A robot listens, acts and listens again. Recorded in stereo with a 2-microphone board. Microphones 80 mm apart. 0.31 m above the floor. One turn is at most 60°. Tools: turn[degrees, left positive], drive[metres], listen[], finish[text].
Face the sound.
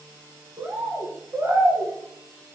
Thought: The bird: about 30° right or 150° right.
Action: turn[-30]
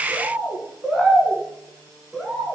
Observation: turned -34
Action: finish[Found it: a bird, straight ahead.]